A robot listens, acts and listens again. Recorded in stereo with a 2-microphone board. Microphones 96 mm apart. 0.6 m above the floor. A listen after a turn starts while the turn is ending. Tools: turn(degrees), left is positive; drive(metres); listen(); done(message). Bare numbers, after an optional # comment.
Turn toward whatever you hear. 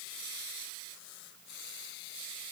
listen()
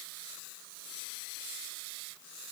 listen()
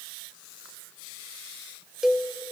turn(-30)
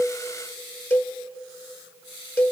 # So it is at 20° left.
turn(20)
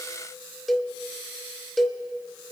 done("Found it: a cowbell, straight ahead.")